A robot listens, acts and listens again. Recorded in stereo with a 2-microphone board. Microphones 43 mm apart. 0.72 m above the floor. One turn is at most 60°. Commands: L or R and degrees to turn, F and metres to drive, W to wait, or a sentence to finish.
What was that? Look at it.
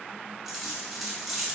R30
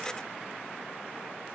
W
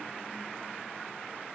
I heard a dropped coin, but can't make it out now. It was about 20° left or 140° right.